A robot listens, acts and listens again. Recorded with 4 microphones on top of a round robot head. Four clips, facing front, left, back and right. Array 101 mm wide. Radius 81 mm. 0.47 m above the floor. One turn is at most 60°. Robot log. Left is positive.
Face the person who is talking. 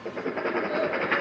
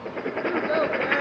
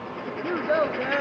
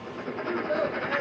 note: The child speaking: 145° left.
cmd yaw +60
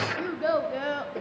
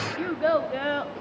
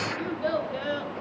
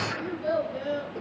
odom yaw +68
note: The child speaking is now 60° left.
cmd yaw +60
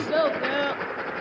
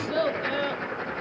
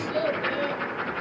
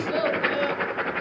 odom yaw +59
note: The child speaking is now 10° right.
cmd yaw -10
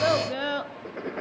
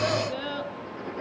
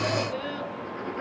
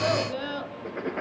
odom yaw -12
note: The child speaking is now 10° right.
cmd yaw -10
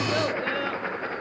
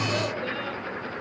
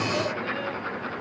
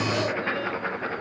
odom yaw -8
cmd idle
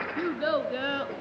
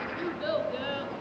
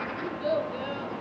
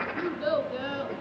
note: The child speaking is now 15° right.
cmd yaw -15
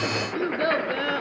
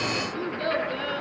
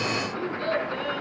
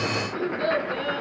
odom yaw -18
end: Facing the child speaking.